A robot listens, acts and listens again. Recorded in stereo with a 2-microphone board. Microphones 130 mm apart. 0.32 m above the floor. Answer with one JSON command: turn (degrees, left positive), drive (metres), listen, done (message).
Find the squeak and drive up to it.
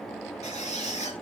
{"turn": 60}
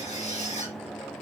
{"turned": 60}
{"turn": 60}
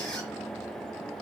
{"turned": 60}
{"drive": 1.0}
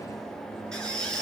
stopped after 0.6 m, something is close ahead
{"done": "Blocked. The squeak is further on, straight ahead."}